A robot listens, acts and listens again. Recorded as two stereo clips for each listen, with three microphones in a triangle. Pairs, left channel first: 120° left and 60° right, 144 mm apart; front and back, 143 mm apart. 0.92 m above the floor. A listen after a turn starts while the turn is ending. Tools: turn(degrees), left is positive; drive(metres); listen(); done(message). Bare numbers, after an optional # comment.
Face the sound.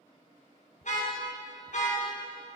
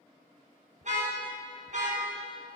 # The car horn: 150° left.
turn(150)
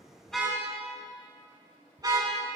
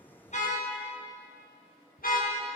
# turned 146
done("Facing the car horn, over 4 m away.")